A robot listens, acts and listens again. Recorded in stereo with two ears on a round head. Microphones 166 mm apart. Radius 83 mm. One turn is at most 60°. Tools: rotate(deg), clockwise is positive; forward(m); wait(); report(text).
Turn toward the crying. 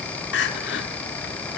rotate(-60)
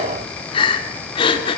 rotate(-30)
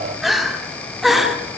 report("Facing the crying.")